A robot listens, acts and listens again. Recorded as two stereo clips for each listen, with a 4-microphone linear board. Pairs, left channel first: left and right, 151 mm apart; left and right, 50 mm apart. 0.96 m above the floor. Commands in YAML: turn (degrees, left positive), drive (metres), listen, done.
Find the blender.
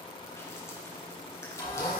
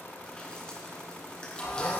turn: 20
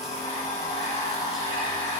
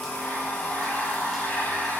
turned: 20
turn: 140
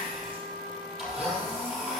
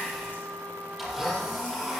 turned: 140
done: "Facing the blender."